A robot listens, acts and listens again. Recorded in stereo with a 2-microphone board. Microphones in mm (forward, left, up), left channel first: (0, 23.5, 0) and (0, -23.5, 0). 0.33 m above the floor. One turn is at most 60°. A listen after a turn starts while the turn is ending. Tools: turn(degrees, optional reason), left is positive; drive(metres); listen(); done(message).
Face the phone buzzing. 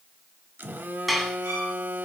turn(degrees=-45, reason="The phone buzzing: about 45° right or 135° right.")
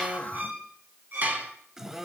turn(degrees=-10, reason="So it is at 10° right.")
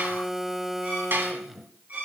done("Facing the phone buzzing, under 1 m away.")